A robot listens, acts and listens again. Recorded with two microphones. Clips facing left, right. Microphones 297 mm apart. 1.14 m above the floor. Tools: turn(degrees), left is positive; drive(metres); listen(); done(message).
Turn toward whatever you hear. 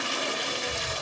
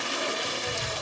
turn(degrees=-45)
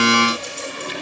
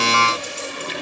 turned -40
listen()
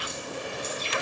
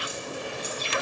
listen()
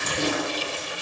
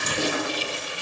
done("Found it: keys jangling, straight ahead, over 4 m away.")